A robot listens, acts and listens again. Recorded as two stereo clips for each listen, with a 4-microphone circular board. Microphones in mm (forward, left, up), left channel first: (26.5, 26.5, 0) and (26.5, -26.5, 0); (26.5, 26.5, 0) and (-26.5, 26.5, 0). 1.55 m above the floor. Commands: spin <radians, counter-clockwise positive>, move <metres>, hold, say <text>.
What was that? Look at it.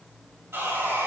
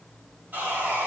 spin -2.27
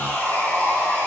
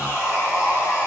spin 0.61
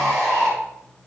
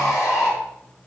spin 0.17
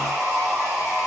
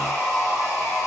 say Found it: sawing, straight ahead.